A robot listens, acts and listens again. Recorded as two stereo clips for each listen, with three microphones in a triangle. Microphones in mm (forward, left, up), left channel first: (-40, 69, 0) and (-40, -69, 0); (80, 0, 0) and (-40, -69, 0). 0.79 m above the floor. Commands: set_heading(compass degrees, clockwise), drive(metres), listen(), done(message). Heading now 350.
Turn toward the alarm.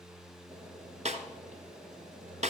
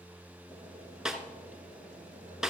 listen()
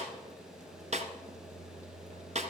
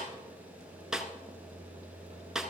listen()
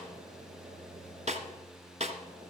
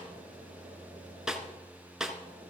done("I can't make out an alarm to turn to.")